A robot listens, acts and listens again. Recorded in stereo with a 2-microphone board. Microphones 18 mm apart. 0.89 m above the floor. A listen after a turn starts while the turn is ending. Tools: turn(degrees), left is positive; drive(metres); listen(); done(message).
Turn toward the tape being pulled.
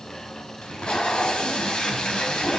turn(degrees=55)
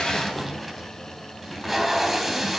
done("Found it: tape being pulled, straight ahead, 2 to 4 m away.")